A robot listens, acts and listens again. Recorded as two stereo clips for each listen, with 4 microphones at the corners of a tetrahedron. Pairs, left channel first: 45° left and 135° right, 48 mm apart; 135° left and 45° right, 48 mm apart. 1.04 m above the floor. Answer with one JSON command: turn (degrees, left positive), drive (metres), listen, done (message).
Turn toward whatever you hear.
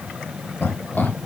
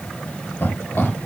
{"turn": 90}
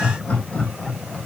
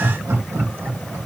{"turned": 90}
{"turn": -20}
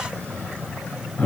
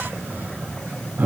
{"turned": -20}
{"done": "Facing the laughter."}